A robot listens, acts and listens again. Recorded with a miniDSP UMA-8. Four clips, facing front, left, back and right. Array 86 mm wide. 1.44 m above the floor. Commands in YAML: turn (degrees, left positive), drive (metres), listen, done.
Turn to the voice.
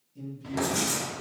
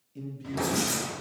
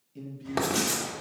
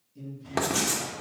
turn: 130
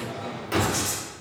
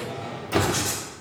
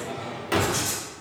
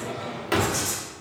listen: true
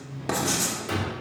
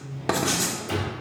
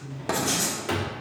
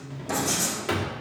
turn: -35
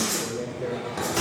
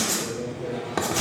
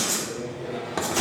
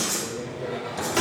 turn: -15
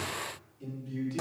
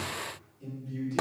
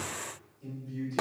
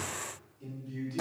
done: "Facing the man speaking."